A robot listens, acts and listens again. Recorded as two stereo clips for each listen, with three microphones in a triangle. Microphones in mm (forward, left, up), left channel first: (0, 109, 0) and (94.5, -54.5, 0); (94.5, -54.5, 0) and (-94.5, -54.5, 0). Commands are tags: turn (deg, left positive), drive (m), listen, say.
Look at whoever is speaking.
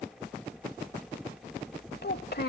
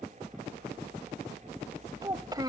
<turn deg="115"/>
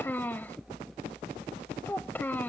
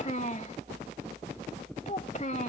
<turn deg="40"/>
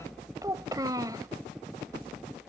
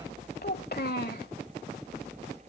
<say>Found it: a child speaking, straight ahead.</say>